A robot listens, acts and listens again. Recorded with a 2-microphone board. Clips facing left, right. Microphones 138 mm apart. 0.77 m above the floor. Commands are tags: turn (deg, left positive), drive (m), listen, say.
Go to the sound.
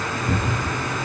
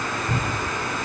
<turn deg="90"/>
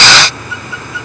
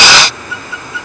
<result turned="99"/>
<turn deg="-10"/>
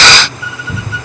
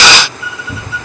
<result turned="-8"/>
<drive m="1.0"/>
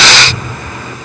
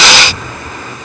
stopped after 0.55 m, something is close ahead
<say>Something is in my way. I am facing the cupboard door but have not reached it.</say>